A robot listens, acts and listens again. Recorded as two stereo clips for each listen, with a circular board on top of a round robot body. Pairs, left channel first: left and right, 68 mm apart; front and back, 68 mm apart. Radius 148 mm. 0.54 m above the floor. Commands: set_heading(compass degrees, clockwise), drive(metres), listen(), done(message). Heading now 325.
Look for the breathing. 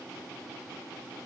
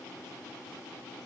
listen()
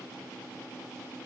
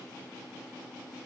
listen()
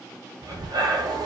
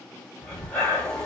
set_heading(40)
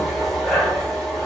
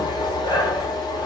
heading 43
done("Facing the breathing, 1 to 2 m away.")